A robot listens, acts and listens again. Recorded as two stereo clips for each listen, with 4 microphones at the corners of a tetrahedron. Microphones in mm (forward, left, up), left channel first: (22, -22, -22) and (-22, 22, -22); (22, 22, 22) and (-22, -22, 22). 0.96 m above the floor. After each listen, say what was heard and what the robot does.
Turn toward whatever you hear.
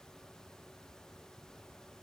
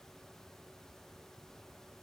Keep listening.
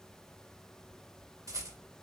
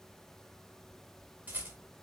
The rattle: 160° left. Turn 160° left.
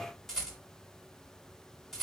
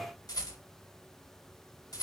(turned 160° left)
The rattle is now 45° left. Turn 45° left.
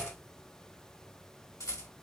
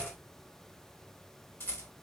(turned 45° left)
The rattle is now 10° right. Turn 10° right.
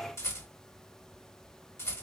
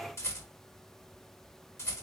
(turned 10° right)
Found it: a rattle, straight ahead.